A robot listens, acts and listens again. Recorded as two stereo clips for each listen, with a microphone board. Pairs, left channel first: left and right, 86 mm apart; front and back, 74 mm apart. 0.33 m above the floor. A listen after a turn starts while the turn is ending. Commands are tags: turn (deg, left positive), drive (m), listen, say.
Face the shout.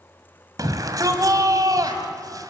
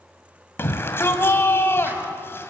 <turn deg="-55"/>
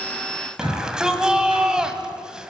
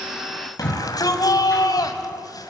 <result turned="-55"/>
<turn deg="-10"/>
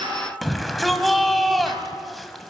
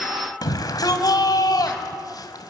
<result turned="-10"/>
<say>Found it: a shout, straight ahead.</say>